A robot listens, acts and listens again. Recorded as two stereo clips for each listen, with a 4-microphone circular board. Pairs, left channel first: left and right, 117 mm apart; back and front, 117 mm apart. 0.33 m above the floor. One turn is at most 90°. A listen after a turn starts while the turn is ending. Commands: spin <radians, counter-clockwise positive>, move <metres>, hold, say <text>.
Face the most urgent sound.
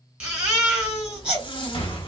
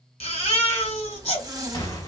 spin -1.57
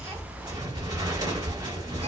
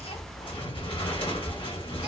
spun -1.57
spin -1.40
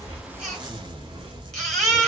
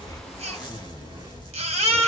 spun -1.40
say Facing the baby crying, 1 to 2 m away.